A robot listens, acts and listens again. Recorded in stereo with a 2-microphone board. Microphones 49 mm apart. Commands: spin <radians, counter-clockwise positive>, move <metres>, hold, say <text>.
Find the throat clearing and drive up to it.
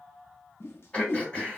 spin 0.52
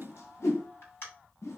spin 2.09
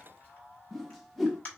spin 0.61
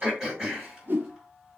spin -0.26
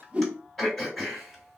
move 1.0
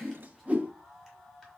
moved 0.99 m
hold
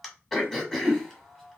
move 1.0
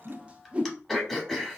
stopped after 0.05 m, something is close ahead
say Arrived at the throat clearing, straight ahead.